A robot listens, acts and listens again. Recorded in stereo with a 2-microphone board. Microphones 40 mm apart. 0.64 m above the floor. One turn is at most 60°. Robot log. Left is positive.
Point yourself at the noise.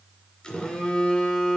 note: The phone buzzing: about 25° left or 155° left.
cmd yaw +25
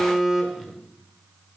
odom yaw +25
end: Found it: a phone buzzing, straight ahead, 1 to 2 m away.